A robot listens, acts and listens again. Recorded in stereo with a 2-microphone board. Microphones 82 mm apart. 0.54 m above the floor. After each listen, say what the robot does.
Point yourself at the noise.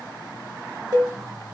Turn 45° right.
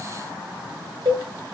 Turn 80° right.
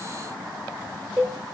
Turn 10° right.
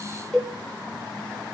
Facing the cowbell.